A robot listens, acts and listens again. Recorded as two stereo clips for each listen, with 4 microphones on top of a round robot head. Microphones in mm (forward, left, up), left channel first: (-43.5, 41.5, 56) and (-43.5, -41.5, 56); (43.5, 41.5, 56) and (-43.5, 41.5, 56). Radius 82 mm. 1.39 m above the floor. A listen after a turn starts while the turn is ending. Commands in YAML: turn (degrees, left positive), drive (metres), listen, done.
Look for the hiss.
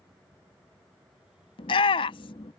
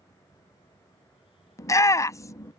listen: true
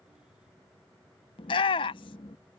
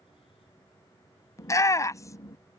listen: true
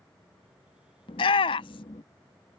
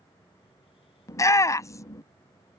done: "I can't make out a hiss to turn to."